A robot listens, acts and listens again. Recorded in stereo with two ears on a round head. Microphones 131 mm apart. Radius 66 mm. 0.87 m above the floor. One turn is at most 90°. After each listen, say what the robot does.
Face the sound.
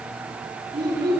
Turn 30° right.
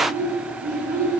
Turn 90° right.
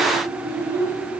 Turn 70° right.
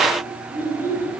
Turn 15° right.
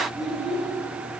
Facing the child speaking, over 4 m away.